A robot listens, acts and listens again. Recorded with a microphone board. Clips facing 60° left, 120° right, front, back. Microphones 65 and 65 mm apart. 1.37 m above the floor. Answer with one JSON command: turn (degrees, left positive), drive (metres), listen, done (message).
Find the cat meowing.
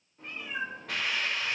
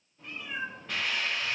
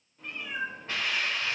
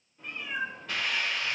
{"turn": 85}
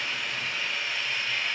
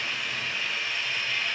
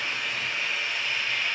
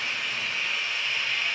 {"listen": true}
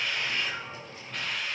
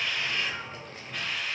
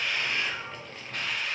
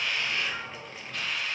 {"turn": -70}
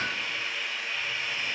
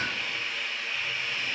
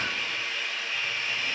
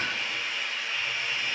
{"listen": true}
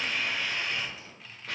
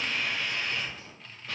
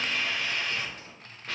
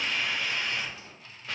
{"turn": -35}
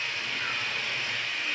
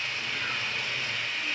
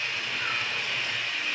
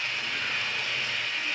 {"listen": true}
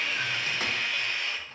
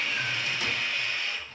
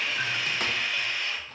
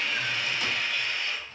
{"listen": true}
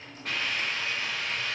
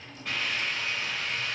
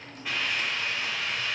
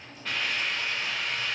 {"done": "Found it: a cat meowing, straight ahead."}